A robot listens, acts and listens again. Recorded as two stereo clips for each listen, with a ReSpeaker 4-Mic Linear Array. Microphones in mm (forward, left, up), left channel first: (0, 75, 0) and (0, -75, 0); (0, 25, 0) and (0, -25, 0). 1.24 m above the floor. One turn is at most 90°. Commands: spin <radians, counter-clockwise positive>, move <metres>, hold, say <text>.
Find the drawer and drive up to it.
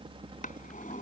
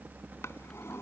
spin 1.22
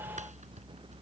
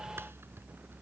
hold
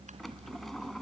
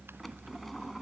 move 1.0
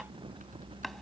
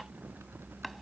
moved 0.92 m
hold
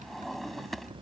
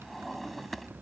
move 1.0
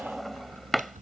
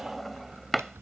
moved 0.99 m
move 1.0
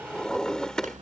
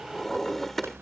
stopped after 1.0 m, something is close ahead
say I am next to the drawer.